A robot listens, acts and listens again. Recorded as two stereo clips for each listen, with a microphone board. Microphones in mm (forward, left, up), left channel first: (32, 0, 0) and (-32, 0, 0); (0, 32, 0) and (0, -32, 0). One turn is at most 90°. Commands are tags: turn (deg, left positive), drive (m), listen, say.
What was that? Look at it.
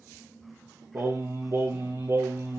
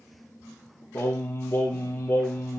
<turn deg="90"/>
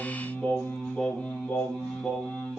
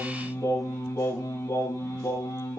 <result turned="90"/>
<turn deg="80"/>
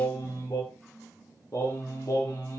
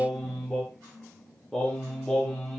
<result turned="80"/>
<turn deg="10"/>
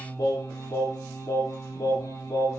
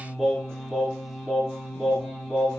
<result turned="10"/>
<say>Found it: singing, straight ahead, over 4 m away.</say>